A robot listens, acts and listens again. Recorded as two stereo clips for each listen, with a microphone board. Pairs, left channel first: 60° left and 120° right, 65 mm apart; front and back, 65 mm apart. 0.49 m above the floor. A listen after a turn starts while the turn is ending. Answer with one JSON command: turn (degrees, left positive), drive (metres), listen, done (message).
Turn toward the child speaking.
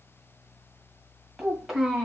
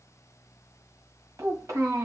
{"turn": 160}
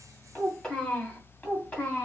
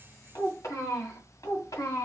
{"done": "Found it: a child speaking, straight ahead, 2 to 4 m away."}